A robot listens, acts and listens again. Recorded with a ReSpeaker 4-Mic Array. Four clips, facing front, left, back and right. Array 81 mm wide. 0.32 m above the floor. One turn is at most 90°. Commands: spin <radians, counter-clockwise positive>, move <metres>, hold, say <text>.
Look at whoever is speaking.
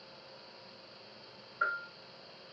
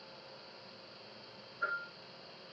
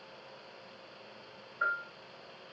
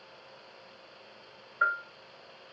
hold
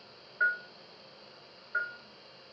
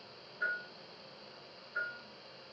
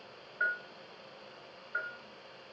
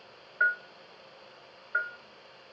hold
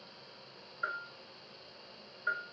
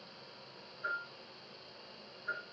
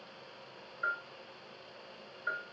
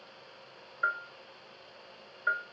say I can't make out anyone speaking to turn to.